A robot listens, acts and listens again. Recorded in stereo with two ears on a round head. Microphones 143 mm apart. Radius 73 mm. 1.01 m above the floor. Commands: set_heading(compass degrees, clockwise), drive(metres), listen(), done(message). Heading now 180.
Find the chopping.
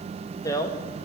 listen()
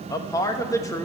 listen()
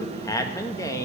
done("I can't make out chopping, only a man speaking.")